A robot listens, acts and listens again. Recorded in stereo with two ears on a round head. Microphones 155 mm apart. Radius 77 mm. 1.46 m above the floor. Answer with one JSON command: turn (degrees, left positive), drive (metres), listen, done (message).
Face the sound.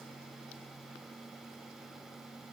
{"listen": true}
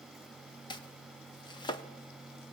{"turn": 25}
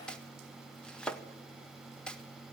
{"done": "Facing the chopping."}